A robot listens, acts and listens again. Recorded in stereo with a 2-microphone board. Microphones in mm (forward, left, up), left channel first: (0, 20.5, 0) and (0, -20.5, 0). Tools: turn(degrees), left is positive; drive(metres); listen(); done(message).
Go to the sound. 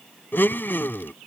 turn(degrees=50)
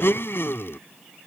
turn(degrees=75)
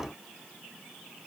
listen()
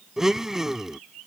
turn(degrees=-10)
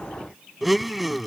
drive(metres=1.0)
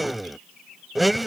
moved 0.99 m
drive(metres=1.0)
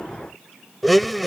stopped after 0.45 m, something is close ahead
done("I am next to the blender.")